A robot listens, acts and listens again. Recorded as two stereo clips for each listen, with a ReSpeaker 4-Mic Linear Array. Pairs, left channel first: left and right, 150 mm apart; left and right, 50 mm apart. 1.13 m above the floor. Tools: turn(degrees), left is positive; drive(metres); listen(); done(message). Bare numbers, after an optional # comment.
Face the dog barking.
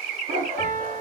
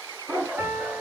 # The dog barking: about 50° right or 130° right.
turn(-50)
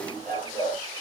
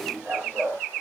# So it is at 70° right.
turn(-70)
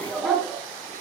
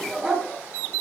done("Found it: a dog barking, straight ahead.")